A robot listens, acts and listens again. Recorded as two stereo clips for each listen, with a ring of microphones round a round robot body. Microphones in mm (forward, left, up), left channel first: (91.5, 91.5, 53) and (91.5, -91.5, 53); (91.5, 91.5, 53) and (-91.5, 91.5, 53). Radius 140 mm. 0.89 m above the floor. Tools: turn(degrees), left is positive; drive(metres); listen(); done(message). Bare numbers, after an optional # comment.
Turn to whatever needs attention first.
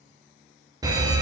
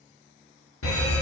# The alarm: 20° right.
turn(-20)
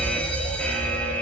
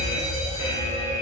done("Facing the alarm, 1 to 2 m away.")